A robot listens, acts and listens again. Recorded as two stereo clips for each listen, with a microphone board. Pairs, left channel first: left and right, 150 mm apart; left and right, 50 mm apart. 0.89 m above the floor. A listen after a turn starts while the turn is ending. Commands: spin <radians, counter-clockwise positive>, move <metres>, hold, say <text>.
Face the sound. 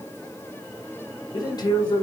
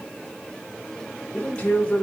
spin 0.52
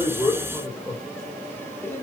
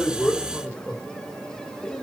spin 0.17
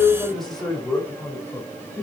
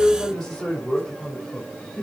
say Found it: a man speaking, straight ahead.